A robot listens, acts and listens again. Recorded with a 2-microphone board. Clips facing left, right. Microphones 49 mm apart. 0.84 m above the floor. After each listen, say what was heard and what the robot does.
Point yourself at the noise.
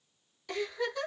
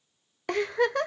The giggle: about 55° right or 125° right. Turn 55° right.
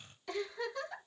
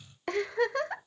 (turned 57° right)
So it is at 65° right. Turn 65° right.
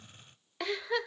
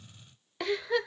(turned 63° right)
Facing the giggle, under 1 m away.